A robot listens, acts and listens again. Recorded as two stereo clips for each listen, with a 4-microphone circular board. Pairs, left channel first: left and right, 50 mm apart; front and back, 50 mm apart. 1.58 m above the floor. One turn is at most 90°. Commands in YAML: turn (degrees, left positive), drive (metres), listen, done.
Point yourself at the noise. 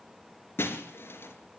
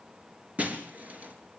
turn: 90
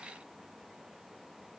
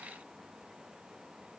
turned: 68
turn: 55
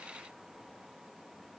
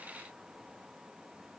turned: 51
done: "I heard breaking glass from this way, but can't make it out now."